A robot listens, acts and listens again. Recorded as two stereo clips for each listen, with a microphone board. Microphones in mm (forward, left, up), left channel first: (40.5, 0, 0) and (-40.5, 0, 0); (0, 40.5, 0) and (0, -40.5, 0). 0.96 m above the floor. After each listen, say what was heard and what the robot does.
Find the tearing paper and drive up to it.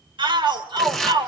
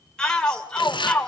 The tearing paper: 90° left. Turn 90° left.
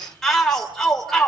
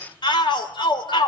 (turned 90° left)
Keep listening.
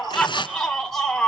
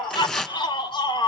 Drive 1.0 m forward.
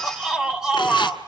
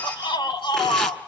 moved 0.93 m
Keep listening.
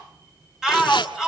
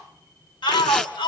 Keep listening.
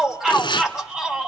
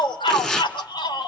Drive 1.0 m forward.
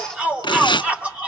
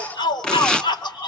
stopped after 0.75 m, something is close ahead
The tearing paper is now 10° left. Turn 10° left.
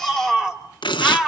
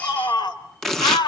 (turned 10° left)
I am next to the tearing paper.